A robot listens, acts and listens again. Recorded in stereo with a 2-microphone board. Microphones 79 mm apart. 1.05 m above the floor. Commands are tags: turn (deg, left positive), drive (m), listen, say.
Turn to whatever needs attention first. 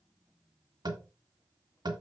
<listen/>
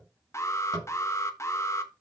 <turn deg="35"/>
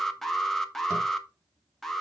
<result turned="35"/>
<say>Found it: an alarm, straight ahead.</say>